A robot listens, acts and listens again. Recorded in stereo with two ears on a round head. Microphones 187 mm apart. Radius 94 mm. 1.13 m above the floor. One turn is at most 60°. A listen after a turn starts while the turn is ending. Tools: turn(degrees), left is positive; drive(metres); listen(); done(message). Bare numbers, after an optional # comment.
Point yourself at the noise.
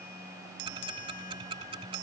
# The ticking: about 25° right or 155° right.
turn(-25)
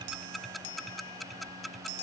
done("Facing the ticking.")